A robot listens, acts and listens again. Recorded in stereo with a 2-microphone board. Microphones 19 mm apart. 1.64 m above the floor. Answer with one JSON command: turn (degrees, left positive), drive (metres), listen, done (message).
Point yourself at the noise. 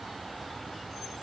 {"listen": true}
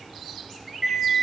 {"turn": -55}
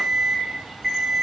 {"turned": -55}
{"turn": -50}
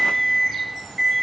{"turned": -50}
{"turn": -20}
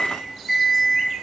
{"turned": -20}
{"done": "Found it: an alarm clock, straight ahead, 1 to 2 m away."}